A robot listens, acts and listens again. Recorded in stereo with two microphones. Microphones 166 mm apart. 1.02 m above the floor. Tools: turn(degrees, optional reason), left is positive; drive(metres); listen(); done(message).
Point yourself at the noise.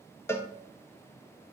turn(degrees=30)
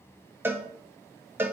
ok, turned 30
turn(degrees=-15, reason="So it is at 15° right.")
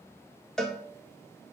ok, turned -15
done("Facing the cowbell, 1 to 2 m away.")